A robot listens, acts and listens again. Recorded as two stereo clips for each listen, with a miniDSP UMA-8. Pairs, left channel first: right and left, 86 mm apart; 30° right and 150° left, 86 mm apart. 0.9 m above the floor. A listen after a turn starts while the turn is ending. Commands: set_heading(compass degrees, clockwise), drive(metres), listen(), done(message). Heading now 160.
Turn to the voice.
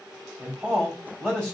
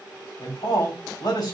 set_heading(170)
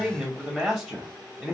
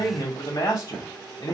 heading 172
done("Found it: a man speaking, straight ahead.")